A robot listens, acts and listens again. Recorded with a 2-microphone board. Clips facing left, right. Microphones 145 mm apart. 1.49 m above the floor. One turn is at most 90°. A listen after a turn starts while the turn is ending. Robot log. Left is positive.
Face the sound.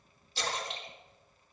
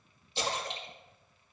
note: The splash: about 20° right or 160° right.
cmd yaw -20
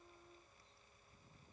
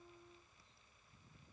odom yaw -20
cmd idle
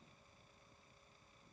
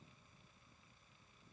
end: I heard a splash, but can't make it out now. It was about straight ahead or 140° right.